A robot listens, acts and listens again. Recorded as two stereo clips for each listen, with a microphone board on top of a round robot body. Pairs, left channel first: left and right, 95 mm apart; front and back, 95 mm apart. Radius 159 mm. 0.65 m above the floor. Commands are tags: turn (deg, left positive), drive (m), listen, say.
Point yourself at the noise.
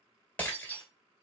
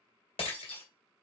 <turn deg="20"/>
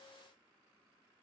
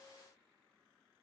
<say>Facing where the breaking glass came from. I can't hear it now.</say>